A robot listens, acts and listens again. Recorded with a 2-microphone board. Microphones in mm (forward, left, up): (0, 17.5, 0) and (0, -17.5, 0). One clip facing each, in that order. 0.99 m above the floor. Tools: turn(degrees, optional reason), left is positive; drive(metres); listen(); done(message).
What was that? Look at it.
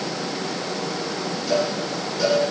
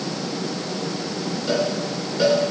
turn(degrees=-35, reason="The cowbell: about 35° right or 145° right.")
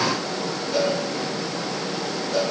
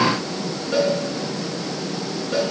turn(degrees=-110, reason="So it is at 110° right.")
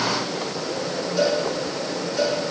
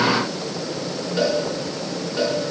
turn(degrees=-35, reason="The cowbell is now 35° right.")
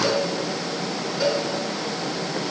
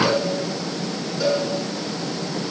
turn(degrees=10, reason="The cowbell is now 10° left.")
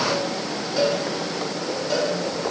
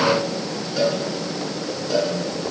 done("Found it: a cowbell, straight ahead, over 4 m away.")